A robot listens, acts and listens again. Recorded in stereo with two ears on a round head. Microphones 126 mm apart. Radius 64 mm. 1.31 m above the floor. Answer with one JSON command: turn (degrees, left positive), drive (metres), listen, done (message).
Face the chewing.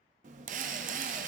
{"turn": -55}
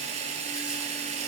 {"listen": true}
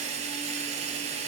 {"listen": true}
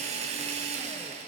{"done": "I heard chewing, but can't make it out now. It was about straight ahead or 70° right."}